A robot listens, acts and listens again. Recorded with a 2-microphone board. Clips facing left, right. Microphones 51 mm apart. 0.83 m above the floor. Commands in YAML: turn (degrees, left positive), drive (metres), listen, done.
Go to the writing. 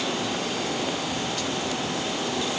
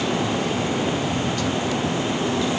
listen: true
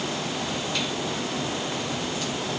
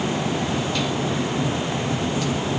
listen: true
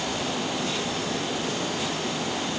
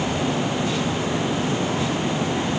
done: "I can't make out writing to turn to."